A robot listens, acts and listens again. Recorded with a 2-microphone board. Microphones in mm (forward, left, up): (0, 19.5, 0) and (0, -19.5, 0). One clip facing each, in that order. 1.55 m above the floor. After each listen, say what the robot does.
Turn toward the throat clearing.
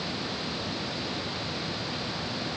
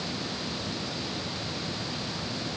Keep listening.
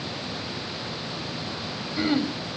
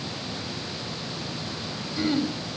Turn 20° left.
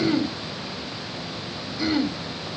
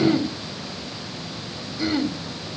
Facing the throat clearing, 1 to 2 m away.